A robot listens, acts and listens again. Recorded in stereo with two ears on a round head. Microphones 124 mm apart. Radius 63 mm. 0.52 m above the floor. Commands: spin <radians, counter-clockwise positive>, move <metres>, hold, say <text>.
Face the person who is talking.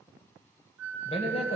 spin 0.87
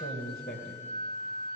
spin 1.40
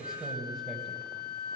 say Facing the man speaking.